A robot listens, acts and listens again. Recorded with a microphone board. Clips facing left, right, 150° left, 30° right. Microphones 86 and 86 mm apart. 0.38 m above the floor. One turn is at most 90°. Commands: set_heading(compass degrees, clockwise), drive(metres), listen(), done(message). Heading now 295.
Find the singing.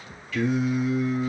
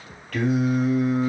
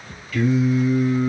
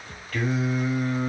set_heading(5)
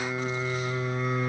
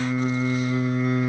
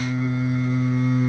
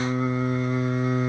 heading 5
done("Found it: singing, straight ahead, 2 to 4 m away.")